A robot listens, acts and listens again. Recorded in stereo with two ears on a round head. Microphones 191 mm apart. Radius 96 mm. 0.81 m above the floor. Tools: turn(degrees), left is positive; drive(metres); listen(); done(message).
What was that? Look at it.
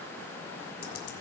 turn(degrees=90)
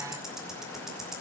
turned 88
done("Facing the ticking, 2 to 4 m away.")